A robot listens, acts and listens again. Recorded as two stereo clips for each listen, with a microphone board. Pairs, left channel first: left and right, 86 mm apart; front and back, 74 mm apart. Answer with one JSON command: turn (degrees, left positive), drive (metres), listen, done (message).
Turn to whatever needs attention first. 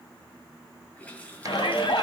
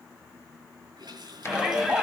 {"turn": 95}
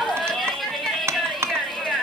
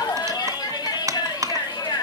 {"done": "Facing the shout, 2 to 4 m away."}